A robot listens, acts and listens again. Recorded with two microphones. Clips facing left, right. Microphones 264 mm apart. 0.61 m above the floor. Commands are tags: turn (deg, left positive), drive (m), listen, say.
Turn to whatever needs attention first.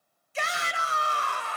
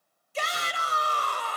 <turn deg="-40"/>
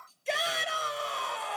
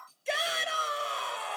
<say>Found it: a shout, straight ahead, 2 to 4 m away.</say>